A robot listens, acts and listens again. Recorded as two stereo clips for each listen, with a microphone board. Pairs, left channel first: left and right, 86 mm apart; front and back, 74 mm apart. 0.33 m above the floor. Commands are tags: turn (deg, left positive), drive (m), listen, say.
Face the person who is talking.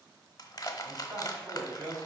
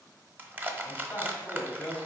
<turn deg="-60"/>
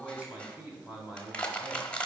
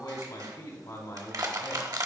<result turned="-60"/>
<turn deg="-20"/>
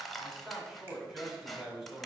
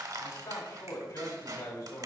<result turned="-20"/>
<say>Found it: a man speaking, straight ahead, 1 to 2 m away.</say>